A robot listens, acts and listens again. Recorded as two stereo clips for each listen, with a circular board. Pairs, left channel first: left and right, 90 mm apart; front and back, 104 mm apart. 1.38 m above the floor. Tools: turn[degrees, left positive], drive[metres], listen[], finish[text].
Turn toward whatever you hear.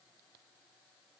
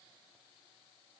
Action: listen[]
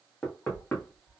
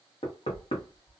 Thought: The knocking: 10° left.
Action: turn[10]
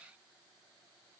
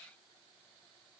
Action: listen[]
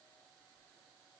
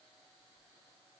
Action: listen[]
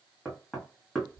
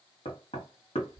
Action: finish[Facing the knocking.]